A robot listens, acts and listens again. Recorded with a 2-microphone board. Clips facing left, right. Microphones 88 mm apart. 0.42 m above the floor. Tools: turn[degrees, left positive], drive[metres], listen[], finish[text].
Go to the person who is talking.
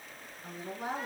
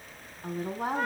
Thought: The woman speaking: about 55° right or 125° right.
Action: turn[-55]
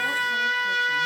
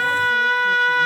Action: listen[]
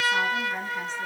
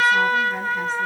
Action: listen[]
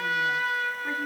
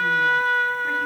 Action: finish[I heard a woman speaking, but can't make it out now. It was about straight ahead or 70° right. I did not reach it.]